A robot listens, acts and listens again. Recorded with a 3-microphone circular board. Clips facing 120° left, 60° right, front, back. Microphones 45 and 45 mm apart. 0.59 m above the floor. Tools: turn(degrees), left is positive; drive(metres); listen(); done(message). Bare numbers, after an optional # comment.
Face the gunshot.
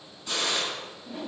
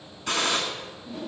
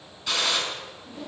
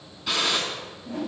# The gunshot: 95° right.
turn(-95)
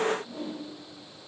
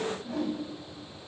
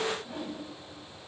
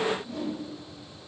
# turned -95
done("I heard a gunshot from this way, but can't make it out now.")